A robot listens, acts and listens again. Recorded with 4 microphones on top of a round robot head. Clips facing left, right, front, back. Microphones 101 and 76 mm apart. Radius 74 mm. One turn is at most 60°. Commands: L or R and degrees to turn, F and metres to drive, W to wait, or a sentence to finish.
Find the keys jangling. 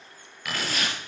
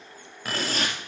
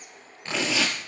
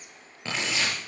R60
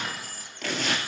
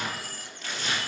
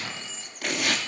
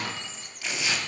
R60
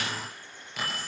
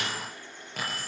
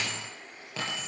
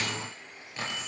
R30
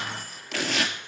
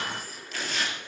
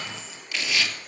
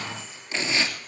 Found it: keys jangling, straight ahead, over 4 m away.